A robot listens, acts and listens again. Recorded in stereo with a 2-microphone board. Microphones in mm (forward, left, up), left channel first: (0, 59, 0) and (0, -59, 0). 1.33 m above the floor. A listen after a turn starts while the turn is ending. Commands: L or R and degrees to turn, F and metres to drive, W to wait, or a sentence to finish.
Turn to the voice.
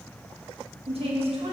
R55
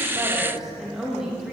Facing the woman speaking, 2 to 4 m away.